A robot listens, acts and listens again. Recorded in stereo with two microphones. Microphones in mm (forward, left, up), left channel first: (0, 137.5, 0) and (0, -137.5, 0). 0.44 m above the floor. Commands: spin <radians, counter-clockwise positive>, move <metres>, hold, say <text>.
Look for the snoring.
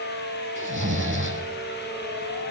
spin -0.79
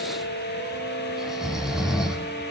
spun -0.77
say Found it: snoring, straight ahead, 2 to 4 m away.